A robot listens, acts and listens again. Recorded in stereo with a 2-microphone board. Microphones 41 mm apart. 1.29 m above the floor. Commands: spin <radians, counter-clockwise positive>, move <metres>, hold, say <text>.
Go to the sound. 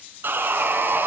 spin -1.05
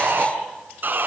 spin -0.96
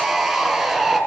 move 1.0
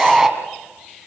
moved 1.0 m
spin -0.17
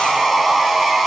move 1.0
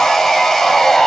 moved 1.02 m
spin 0.17
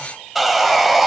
move 1.0
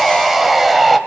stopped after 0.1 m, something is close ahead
say I am next to the sawing.